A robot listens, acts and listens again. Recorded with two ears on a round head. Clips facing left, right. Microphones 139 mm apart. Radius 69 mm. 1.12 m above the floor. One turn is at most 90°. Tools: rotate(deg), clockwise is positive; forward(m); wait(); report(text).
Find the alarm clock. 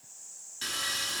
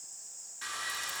wait()
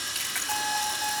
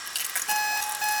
rotate(90)
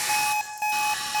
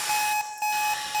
report("Found it: an alarm clock, straight ahead, over 4 m away.")